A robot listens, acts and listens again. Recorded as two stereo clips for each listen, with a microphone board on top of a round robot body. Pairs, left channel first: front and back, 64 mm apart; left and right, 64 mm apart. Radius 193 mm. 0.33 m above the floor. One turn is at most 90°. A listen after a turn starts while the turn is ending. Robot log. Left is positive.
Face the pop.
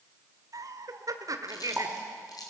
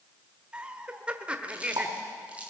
note: The pop: 90° right.
cmd yaw -90
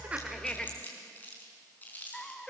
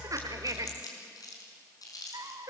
end: I heard a pop from this way, but can't make it out now.